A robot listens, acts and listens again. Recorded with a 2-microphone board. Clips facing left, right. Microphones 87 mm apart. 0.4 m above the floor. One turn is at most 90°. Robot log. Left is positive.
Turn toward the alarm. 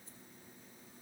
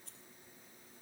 cmd idle
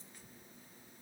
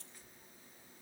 cmd idle
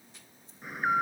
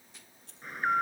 cmd yaw +30
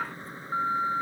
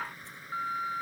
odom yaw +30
note: So it is at 150° left.
cmd yaw +90
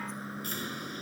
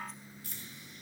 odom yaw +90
note: The alarm is now 70° left.
cmd yaw +70
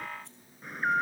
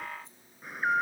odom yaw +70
end: Facing the alarm.